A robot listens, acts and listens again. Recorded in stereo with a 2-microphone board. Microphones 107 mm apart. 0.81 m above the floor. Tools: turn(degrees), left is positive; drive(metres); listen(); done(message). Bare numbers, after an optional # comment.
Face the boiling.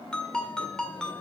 listen()
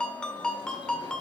listen()
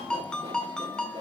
done("I can't make out boiling, only a ringtone.")